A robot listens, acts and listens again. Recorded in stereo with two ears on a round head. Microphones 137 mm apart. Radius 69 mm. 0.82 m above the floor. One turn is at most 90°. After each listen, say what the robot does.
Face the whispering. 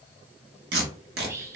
Turn 20° right.
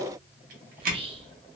Turn 90° right.
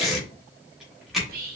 Turn 80° right.
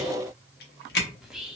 Found it: whispering, straight ahead, under 1 m away.